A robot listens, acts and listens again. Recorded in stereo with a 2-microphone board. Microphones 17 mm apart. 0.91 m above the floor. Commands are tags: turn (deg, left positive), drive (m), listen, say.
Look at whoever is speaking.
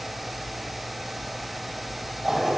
<listen/>
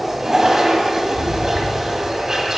<listen/>
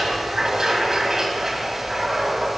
<say>I can't make out anyone speaking, only a toilet flushing.</say>